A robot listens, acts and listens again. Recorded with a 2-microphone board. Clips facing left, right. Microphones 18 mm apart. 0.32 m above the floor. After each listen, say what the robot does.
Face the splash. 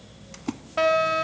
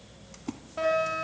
Turn 25° left.
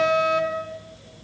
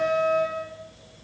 Keep listening.
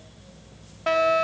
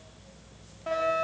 I heard a splash, but can't make it out now. It was about straight ahead or 130° left.